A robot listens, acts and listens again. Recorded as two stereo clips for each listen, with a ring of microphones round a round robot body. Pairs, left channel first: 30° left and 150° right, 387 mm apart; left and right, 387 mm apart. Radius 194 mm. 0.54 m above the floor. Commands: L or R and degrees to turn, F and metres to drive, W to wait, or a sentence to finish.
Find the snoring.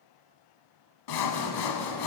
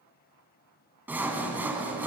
W
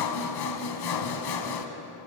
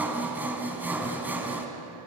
W
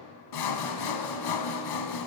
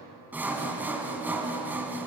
I can't make out snoring to turn to.